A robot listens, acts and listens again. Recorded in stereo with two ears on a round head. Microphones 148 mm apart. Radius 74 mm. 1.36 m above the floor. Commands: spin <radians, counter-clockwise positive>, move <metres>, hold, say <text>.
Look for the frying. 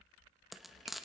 spin 0.52
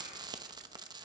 spin -0.52
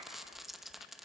say Facing the frying, under 1 m away.